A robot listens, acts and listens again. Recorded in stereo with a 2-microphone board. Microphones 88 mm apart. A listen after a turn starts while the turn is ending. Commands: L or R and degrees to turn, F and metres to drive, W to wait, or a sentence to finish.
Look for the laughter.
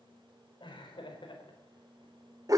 L65
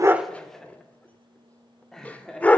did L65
Found it: laughter, straight ahead, 2 to 4 m away.